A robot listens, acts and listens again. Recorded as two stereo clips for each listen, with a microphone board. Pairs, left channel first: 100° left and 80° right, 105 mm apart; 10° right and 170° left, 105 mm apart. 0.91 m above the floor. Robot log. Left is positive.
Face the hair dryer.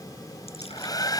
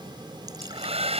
note: The hair dryer: 155° left.
cmd yaw +155
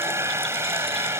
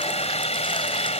note: The hair dryer is now 15° right.
cmd yaw -15
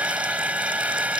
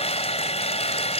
end: Facing the hair dryer.